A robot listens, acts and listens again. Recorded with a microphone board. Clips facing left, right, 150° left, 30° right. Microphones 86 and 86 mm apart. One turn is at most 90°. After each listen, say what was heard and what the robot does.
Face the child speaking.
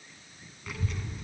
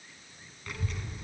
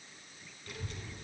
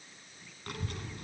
Found it: a child speaking, straight ahead, 2 to 4 m away.